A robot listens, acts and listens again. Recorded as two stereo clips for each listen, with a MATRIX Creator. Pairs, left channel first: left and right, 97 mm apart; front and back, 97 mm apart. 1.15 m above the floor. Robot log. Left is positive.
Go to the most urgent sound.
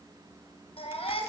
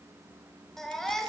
note: The baby crying: 85° left.
cmd yaw +85
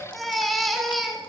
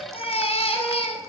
cmd fwd 1.0
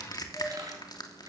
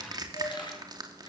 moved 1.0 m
cmd idle
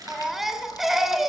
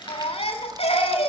cmd fwd 1.0
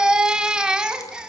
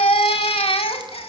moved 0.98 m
note: The baby crying is now 10° right.
cmd yaw -10
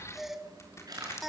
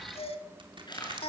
cmd fwd 1.0
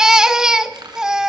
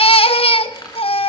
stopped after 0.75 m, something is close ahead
end: Arrived at the baby crying, straight ahead.